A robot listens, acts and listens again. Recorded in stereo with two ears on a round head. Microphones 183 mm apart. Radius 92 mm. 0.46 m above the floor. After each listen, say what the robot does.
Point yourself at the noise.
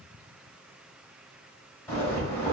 Turn 30° left.
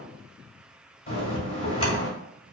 Turn 135° left.
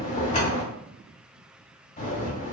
Turn 35° left.
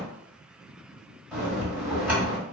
Turn 10° right.
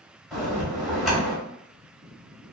Facing the bell, 1 to 2 m away.